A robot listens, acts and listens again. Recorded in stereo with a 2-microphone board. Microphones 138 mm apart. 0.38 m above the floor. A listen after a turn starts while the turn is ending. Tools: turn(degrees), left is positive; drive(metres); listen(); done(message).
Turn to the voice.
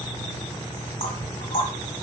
listen()
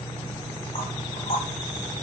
listen()
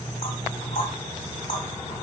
done("I can't make out anyone speaking, only knocking.")